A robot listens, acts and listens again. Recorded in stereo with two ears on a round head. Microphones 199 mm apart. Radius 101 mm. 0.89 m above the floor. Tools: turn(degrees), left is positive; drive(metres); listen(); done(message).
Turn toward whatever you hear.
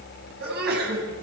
turn(degrees=-45)
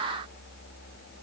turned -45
listen()
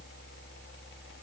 done("I heard a sneeze, but can't make it out now. It was about straight ahead or 90° right.")